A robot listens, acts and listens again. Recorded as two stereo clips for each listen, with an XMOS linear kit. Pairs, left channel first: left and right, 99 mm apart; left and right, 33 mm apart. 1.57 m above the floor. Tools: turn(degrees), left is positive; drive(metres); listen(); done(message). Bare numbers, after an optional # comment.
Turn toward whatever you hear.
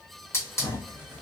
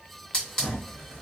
# The hiss: about 30° left or 150° left.
turn(30)
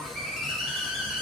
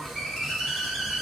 done("Facing the hiss.")